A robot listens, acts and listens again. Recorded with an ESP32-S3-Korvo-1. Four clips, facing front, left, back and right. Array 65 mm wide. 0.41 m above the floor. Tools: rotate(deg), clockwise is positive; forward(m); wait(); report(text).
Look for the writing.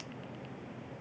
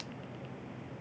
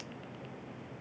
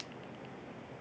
wait()
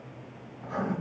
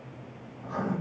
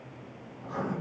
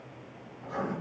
report("Facing the writing.")